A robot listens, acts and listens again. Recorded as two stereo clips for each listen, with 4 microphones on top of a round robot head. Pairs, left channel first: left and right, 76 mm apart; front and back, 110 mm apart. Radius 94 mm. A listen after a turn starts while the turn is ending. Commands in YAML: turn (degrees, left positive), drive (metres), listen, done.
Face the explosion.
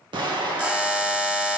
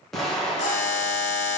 turn: -85
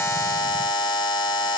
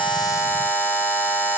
done: "Facing where the explosion came from. I can't hear it now."